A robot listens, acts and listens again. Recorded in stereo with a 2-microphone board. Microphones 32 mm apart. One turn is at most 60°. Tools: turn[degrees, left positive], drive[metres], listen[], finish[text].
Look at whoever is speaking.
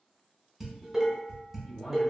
Thought: The man speaking: about 20° left or 160° left.
Action: turn[20]
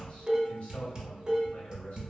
Thought: So it is at 140° left.
Action: turn[60]
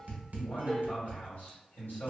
Thought: The man speaking is now 85° left.
Action: turn[60]
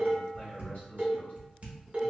Thought: The man speaking is now 55° left.
Action: turn[55]
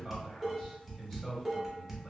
Action: finish[Facing the man speaking.]